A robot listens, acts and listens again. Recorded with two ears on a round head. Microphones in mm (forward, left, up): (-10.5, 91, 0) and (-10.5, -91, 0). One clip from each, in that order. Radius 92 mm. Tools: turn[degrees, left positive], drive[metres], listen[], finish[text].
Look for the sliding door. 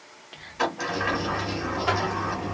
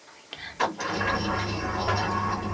Action: turn[30]
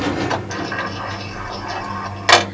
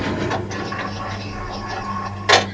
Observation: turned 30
Thought: So it is at 140° left.
Action: turn[140]
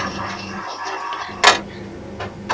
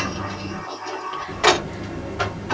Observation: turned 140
Thought: The sliding door is now 50° left.
Action: turn[50]
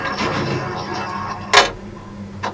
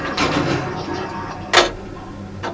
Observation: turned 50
Thought: The sliding door is now 15° left.
Action: turn[15]
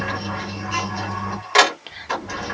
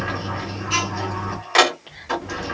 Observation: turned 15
Action: finish[Found it: a sliding door, straight ahead.]